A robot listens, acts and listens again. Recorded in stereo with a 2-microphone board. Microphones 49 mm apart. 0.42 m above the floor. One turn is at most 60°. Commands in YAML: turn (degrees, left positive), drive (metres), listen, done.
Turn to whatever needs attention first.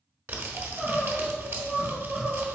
turn: -30
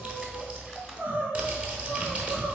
turn: -60
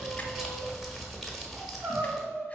turn: -60
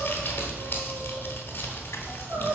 turn: -45
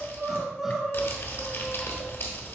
turn: -10
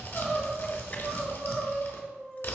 done: "Facing the crying."